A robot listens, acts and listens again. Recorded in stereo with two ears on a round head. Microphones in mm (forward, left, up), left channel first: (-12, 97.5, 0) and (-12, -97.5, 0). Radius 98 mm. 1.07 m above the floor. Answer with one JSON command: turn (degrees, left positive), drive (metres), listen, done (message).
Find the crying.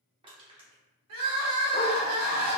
{"turn": -70}
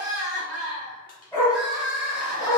{"done": "Facing the crying."}